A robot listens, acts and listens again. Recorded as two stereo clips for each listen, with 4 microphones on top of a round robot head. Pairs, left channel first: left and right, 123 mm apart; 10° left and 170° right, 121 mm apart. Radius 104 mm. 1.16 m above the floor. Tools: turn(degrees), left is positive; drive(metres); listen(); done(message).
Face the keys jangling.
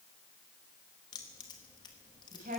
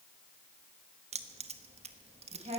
turn(degrees=155)
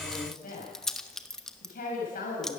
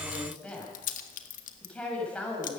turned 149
done("Facing the keys jangling, 1 to 2 m away.")